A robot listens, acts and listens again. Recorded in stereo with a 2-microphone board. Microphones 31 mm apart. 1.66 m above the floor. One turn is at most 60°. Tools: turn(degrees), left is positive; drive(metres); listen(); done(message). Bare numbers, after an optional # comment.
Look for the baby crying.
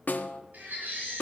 # The baby crying: about 65° right or 115° right.
turn(-60)
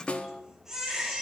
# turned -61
# So it is at 10° right.
turn(-10)
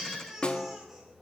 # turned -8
done("Facing the baby crying.")